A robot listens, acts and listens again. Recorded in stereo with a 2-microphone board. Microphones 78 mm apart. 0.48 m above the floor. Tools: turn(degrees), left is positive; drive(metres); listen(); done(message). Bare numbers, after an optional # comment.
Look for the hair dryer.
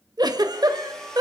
turn(30)
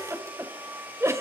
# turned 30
# So it is at 25° right.
turn(-25)
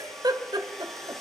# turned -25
done("Found it: a hair dryer, straight ahead, 2 to 4 m away.")